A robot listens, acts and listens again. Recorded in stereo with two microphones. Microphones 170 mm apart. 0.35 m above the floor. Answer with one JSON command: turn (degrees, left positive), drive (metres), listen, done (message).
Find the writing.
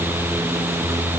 {"listen": true}
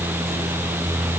{"listen": true}
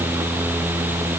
{"done": "I can't make out writing to turn to."}